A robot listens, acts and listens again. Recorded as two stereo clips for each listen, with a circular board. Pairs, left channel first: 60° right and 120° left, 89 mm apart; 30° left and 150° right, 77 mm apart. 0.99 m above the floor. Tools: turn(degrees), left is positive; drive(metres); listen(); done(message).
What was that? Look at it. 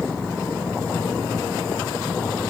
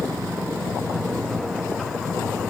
listen()
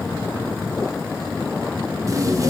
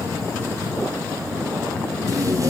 turn(degrees=170)
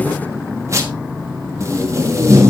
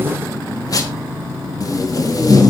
turn(degrees=65)
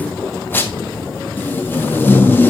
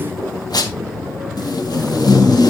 done("Found it: tape being pulled, straight ahead, 1 to 2 m away.")